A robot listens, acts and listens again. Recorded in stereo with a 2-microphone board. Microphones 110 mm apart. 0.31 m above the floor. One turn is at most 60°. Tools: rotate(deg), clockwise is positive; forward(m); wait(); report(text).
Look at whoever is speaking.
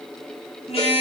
wait()
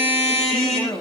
rotate(-25)
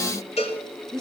report("Found it: a woman speaking, straight ahead.")